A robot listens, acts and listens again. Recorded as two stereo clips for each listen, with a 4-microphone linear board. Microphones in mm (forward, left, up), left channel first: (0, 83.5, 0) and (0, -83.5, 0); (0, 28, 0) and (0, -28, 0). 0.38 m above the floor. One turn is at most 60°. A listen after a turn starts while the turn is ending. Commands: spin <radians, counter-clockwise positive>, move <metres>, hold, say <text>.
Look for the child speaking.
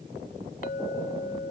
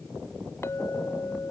hold
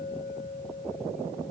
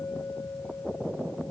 hold
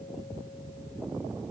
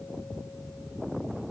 say I can't make out a child speaking to turn to.